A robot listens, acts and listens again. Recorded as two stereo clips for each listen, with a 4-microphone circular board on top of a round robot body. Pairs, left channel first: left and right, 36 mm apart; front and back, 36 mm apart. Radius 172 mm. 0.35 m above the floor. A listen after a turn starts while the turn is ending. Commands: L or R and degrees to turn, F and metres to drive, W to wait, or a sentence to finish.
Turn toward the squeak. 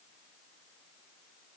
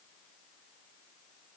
W
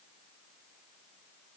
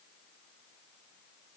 W
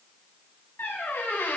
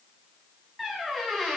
L90
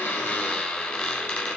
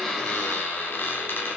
L30
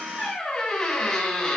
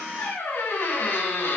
L15
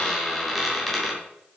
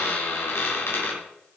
Facing the squeak.